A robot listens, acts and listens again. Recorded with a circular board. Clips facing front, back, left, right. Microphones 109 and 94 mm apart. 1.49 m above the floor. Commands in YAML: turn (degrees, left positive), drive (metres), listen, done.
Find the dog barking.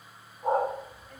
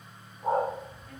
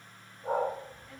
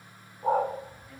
turn: -90
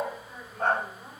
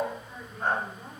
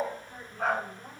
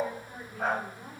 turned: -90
done: "Facing the dog barking, 2 to 4 m away."